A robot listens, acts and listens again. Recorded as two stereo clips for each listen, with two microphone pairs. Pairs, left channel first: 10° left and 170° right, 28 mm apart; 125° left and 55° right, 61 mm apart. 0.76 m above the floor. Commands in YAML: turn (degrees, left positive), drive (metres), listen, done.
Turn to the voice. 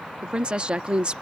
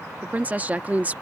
turn: -120
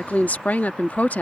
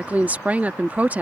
done: "Found it: a woman speaking, straight ahead."